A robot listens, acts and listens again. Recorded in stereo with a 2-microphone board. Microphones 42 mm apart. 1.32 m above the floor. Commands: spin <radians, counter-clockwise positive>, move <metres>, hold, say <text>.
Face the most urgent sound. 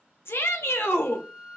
spin 1.57
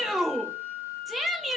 say Facing the shout, under 1 m away.